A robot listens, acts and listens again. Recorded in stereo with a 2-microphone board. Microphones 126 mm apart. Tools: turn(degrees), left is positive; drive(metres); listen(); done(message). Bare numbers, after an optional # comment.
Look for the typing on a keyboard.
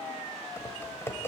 # The typing on a keyboard: about 20° left or 160° left.
turn(20)
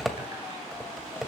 done("Facing the typing on a keyboard.")